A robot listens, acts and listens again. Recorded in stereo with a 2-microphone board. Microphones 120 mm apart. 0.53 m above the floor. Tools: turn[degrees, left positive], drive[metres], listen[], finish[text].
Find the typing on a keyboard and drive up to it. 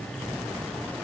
Action: listen[]
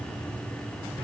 Action: listen[]
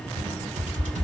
Action: turn[-90]
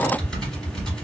Action: drive[1.0]
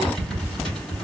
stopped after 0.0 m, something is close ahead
Action: finish[Something is in my way. I am facing the typing on a keyboard but have not reached it.]